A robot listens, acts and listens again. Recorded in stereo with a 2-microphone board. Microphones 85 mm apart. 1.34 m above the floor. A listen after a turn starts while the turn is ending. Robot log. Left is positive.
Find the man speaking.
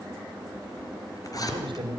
cmd yaw -90
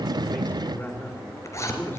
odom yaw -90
note: So it is at 25° left.
cmd yaw +25
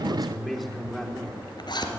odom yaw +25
end: Facing the man speaking.